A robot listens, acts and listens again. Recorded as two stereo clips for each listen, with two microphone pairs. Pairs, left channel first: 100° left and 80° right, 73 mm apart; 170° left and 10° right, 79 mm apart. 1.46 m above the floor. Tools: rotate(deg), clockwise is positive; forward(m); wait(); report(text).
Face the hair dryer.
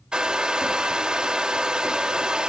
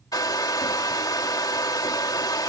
rotate(160)
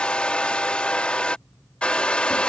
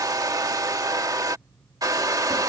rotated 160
rotate(-25)
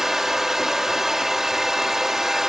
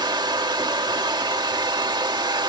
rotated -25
report("Facing the hair dryer.")